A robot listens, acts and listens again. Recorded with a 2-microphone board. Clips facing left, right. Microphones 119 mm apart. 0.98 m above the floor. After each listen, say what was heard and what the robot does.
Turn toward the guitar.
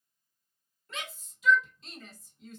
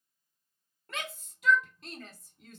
Keep listening.
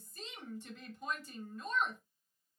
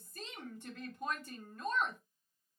Keep listening.
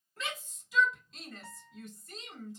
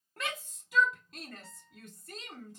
Turn 90° left.
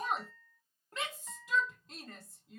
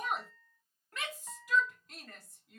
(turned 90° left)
So it is at 10° right. Turn 10° right.
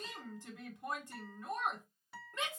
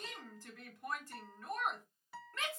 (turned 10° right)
Facing the guitar, 1 to 2 m away.